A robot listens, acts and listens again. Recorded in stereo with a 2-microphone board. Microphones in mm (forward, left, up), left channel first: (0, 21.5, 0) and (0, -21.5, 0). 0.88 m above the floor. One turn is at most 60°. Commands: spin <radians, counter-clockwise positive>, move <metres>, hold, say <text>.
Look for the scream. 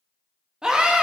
spin -0.35
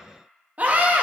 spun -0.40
spin -1.05
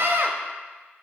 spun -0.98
spin -1.05
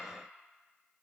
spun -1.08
spin -0.35
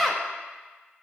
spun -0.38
say Found it: a scream, straight ahead.